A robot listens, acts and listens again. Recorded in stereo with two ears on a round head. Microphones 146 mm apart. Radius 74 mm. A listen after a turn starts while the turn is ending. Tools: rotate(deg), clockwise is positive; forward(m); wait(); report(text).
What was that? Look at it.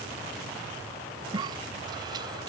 rotate(25)
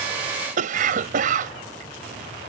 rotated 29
rotate(125)
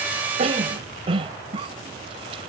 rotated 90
rotate(35)
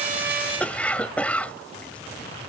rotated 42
rotate(-10)
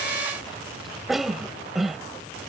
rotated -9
report("Found it: a cough, straight ahead.")